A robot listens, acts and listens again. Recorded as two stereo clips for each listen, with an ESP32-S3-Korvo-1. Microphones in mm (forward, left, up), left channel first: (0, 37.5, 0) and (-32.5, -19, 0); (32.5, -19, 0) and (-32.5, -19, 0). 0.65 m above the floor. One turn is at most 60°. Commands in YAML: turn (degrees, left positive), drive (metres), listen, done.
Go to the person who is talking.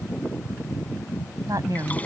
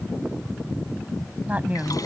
turn: -60
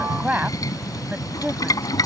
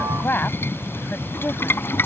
turn: -55
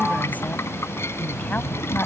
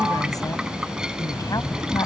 listen: true
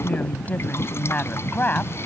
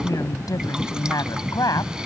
drive: 1.0
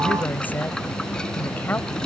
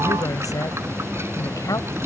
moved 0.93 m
drive: 1.0
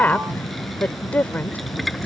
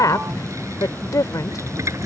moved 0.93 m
drive: 1.0
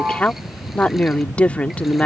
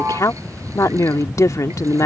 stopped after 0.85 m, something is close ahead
done: "I am next to the woman speaking."